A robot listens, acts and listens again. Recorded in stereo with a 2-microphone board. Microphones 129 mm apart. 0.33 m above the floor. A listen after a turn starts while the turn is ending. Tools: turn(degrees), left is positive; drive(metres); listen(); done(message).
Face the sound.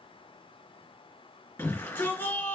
turn(degrees=15)
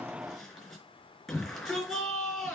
done("Found it: a shout, straight ahead.")